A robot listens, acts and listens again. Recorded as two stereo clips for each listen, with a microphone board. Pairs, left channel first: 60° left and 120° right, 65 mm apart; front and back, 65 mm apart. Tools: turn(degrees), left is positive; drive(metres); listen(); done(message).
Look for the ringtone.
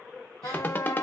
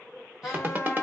turn(degrees=120)
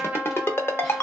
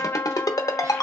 turn(degrees=10)
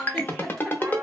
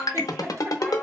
done("Found it: a ringtone, straight ahead.")